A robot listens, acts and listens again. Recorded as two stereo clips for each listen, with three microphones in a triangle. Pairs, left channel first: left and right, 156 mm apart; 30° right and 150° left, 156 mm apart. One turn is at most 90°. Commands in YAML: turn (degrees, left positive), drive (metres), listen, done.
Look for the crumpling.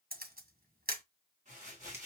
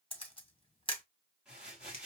turn: -90
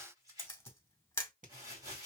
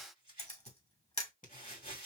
turn: -25
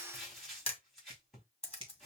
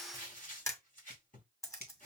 done: "Facing the crumpling."